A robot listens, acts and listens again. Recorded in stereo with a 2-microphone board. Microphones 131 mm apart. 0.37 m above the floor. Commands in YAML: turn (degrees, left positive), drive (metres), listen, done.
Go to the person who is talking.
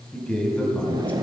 turn: 30
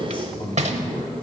turn: 135
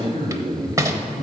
turn: 55
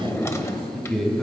drive: 1.0
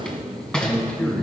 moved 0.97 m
turn: 10
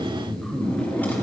drive: 1.0
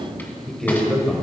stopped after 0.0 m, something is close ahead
done: "I am next to the man speaking."